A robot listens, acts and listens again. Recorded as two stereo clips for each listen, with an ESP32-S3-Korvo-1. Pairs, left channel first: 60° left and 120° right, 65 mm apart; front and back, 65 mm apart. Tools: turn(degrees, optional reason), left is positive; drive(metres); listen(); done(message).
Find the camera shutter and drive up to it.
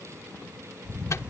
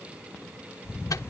turn(degrees=-50, reason="The camera shutter: 50° right.")
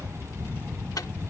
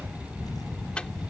drive(metres=1.0)
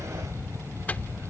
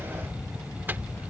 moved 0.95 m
turn(degrees=10, reason="The camera shutter is now 10° left.")
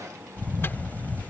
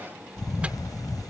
drive(metres=1.0)
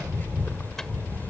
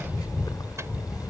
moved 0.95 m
drive(metres=1.0)
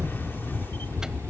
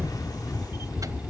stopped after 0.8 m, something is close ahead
done("I am next to the camera shutter.")